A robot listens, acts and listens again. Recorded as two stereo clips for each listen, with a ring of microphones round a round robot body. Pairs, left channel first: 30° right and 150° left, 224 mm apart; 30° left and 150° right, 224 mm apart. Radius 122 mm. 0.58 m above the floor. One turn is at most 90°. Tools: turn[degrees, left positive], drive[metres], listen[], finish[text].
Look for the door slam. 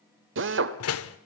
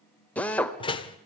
Thought: The door slam: 40° right.
Action: turn[-40]
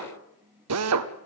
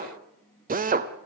Action: finish[I heard a door slam from this way, but can't make it out now.]